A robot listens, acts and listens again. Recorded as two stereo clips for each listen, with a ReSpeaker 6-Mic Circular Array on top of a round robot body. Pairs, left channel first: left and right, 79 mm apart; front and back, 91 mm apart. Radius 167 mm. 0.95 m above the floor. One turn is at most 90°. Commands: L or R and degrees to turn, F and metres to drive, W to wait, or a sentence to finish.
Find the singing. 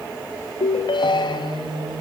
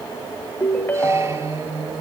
R90
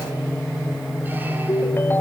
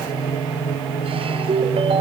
Found it: singing, straight ahead, over 4 m away.